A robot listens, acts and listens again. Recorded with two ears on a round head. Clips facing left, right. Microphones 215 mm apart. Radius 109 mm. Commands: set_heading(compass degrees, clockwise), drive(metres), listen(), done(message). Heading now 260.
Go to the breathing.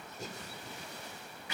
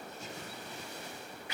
set_heading(225)
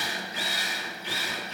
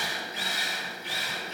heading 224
listen()
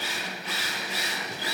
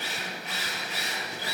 listen()
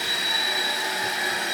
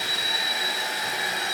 done("I heard breathing, but can't make it out now. It was about straight ahead or 110° left. I did not reach it.")